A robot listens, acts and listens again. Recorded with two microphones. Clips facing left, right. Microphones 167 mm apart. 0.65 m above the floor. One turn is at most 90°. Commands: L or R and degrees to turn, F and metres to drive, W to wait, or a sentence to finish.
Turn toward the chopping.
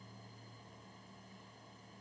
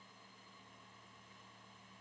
W
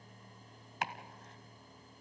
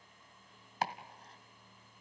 R35
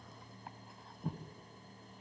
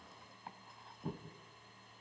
Found it: chopping, straight ahead.